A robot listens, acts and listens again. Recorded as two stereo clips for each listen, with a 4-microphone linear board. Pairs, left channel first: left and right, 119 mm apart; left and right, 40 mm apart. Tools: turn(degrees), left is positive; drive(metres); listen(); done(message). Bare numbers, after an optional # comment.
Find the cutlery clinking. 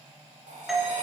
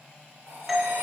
# The cutlery clinking: about 70° right or 110° right.
turn(-70)
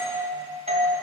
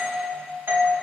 listen()
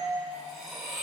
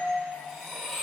done("Facing the cutlery clinking, 1 to 2 m away.")